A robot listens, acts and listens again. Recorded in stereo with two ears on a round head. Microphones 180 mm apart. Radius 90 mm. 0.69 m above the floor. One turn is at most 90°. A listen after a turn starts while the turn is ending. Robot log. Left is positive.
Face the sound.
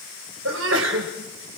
note: The sneeze: about 75° right or 105° right.
cmd yaw -75
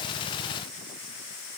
cmd idle
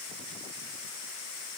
end: I heard a sneeze, but can't make it out now. It was about straight ahead or 30° right.